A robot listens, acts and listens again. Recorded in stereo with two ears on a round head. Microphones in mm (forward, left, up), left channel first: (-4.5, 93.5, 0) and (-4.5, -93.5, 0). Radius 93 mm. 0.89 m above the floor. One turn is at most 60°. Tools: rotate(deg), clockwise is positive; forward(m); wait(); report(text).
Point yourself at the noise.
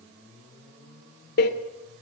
rotate(-50)
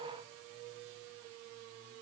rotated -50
wait()
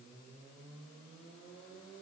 report("I heard a door slam, but can't make it out now. It was about straight ahead or 80° left.")